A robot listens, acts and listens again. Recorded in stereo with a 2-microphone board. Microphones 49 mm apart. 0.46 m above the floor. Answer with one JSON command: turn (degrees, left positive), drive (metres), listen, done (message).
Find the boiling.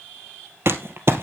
{"listen": true}
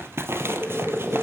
{"turn": -30}
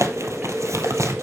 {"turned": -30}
{"turn": -145}
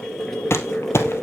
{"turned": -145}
{"turn": 10}
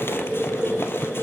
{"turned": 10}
{"done": "Facing the boiling, over 4 m away."}